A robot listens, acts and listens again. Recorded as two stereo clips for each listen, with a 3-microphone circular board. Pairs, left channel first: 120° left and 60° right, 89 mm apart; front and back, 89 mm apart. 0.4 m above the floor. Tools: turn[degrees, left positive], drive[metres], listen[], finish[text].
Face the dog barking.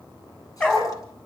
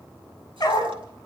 Thought: The dog barking: 50° left.
Action: turn[50]
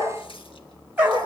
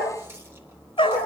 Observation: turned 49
Thought: The dog barking is now 10° left.
Action: turn[10]
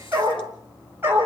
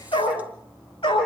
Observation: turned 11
Action: finish[Found it: a dog barking, straight ahead.]